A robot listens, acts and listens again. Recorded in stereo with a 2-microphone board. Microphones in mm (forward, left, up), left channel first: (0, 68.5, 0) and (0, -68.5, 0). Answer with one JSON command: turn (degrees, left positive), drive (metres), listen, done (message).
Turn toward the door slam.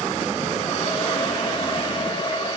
{"listen": true}
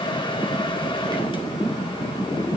{"listen": true}
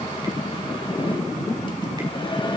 {"done": "I can't make out a door slam to turn to."}